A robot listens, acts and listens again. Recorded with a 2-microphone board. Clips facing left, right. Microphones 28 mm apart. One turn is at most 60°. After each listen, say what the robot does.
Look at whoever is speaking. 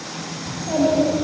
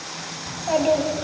Turn 40° right.
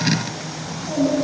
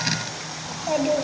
Turn 60° right.
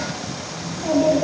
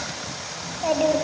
Turn 50° right.
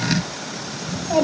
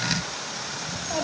Turn 15° left.
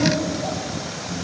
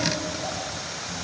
Found it: a child speaking, straight ahead.